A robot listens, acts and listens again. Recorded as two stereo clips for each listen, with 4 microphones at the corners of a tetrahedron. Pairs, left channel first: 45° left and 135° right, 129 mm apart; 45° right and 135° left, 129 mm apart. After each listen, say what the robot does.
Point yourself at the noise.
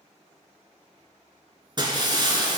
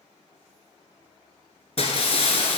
Turn 80° right.
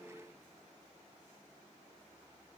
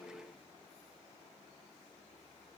I heard breaking glass from this way, but can't make it out now.